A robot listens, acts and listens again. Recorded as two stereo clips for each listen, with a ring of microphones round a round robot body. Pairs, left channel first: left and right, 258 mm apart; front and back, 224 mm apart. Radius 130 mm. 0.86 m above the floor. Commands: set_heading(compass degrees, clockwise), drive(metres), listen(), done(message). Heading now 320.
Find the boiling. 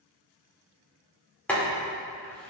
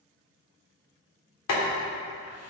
done("Found it: boiling, straight ahead, 2 to 4 m away.")